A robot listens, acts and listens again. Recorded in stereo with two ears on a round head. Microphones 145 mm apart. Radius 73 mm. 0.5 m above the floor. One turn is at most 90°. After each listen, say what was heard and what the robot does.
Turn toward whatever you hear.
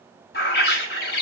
The bird: about 60° left or 120° left. Turn 60° left.
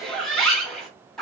Found it: a bird, straight ahead, 1 to 2 m away.